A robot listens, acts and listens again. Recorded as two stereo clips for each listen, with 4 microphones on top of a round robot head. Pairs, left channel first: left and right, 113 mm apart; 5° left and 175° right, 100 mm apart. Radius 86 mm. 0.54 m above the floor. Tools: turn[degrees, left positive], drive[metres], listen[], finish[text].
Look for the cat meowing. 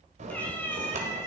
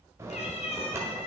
Thought: The cat meowing: 25° left.
Action: turn[25]
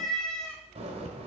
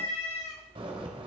Thought: The cat meowing is now 10° left.
Action: turn[10]
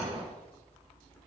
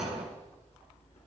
Action: listen[]
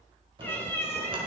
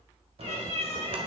Thought: The cat meowing is now 25° left.
Action: turn[25]
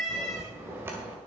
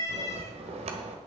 Action: finish[Found it: a cat meowing, straight ahead, 2 to 4 m away.]